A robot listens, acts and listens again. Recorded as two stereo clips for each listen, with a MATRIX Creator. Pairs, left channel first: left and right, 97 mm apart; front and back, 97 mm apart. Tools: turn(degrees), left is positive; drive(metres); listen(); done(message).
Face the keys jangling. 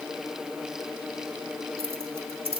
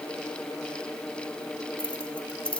turn(degrees=-80)
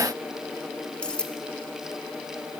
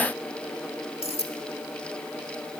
turn(degrees=10)
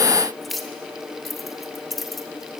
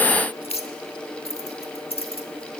done("Found it: keys jangling, straight ahead, 1 to 2 m away.")